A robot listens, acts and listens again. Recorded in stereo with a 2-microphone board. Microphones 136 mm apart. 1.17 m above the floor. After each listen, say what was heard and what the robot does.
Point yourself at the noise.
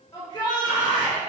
The shout: about 35° left or 145° left. Turn 35° left.
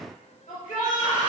So it is at 115° left. Turn 115° left.
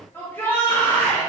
The shout is now 15° left. Turn 15° left.
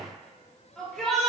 Found it: a shout, straight ahead, 2 to 4 m away.